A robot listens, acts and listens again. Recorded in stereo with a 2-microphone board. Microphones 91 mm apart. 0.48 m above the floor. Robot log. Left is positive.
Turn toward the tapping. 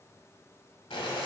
cmd idle
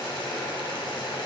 cmd idle
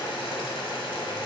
end: I can't make out tapping to turn to.